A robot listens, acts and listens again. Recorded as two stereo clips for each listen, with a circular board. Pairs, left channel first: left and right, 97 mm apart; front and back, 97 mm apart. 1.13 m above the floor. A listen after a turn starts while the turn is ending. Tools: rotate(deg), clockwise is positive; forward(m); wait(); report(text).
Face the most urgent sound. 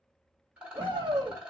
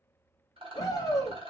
rotate(55)
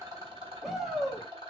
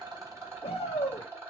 report("Found it: a shout, straight ahead, 1 to 2 m away.")